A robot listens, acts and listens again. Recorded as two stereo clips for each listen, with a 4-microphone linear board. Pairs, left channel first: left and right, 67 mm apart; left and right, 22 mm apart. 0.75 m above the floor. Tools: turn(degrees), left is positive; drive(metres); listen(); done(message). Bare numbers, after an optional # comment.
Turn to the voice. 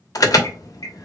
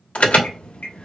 listen()
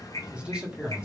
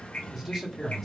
turn(-30)
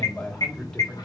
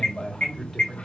# So it is at 10° left.
turn(10)
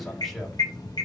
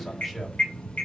listen()
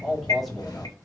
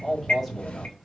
done("Found it: a man speaking, straight ahead.")